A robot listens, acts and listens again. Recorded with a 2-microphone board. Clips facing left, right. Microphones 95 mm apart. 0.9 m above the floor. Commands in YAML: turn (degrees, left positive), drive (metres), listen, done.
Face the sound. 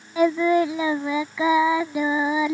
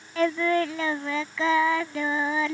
turn: 30
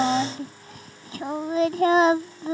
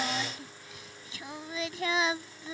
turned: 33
turn: 130
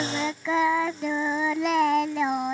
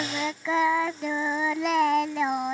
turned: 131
done: "Facing the singing."